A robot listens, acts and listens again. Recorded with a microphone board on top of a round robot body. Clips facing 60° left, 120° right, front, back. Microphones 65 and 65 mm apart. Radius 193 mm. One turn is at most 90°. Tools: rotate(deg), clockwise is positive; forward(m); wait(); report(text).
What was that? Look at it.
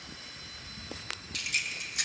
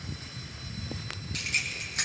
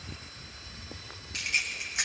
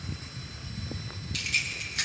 rotate(75)
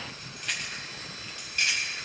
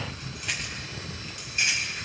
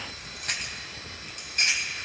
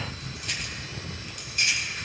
rotate(50)
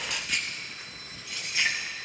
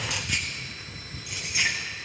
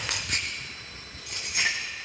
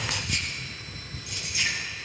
rotate(45)
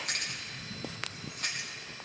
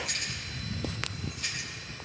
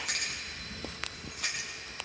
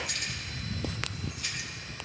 rotate(-20)
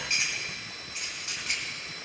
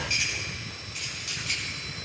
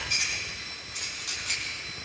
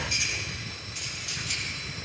report("Found it: keys jangling, straight ahead, 2 to 4 m away.")